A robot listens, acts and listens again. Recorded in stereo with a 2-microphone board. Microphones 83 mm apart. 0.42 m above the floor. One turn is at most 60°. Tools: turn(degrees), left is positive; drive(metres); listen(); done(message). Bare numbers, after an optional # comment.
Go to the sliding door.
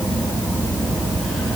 listen()
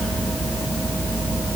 listen()
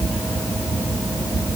done("I can't make out a sliding door.")